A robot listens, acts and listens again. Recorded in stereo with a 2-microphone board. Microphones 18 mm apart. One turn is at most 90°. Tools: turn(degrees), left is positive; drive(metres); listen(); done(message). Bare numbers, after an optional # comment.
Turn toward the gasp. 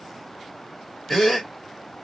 turn(30)
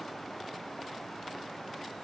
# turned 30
listen()
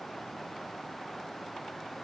done("I heard a gasp, but can't make it out now. It was about 20° right or 140° left.")